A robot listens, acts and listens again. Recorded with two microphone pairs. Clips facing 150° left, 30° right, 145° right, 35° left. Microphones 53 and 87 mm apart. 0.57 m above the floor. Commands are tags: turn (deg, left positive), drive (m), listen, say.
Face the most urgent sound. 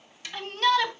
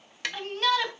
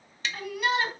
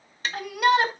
<turn deg="50"/>
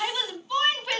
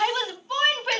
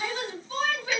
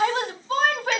<turn deg="10"/>
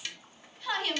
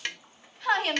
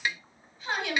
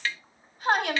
<say>Found it: a shout, straight ahead, 2 to 4 m away.</say>